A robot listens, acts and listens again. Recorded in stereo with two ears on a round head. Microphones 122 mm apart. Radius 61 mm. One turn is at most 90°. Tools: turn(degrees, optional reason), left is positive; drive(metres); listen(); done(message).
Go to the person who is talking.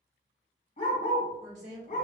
turn(degrees=-60, reason="The woman speaking: about 60° right or 120° right.")
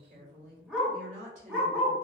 turn(degrees=-55, reason="So it is at 55° right.")
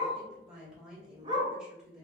turn(degrees=-10, reason="The woman speaking is now 10° right.")
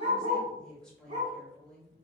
drive(metres=1.0)
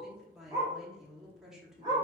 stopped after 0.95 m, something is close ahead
done("Arrived at the woman speaking, straight ahead.")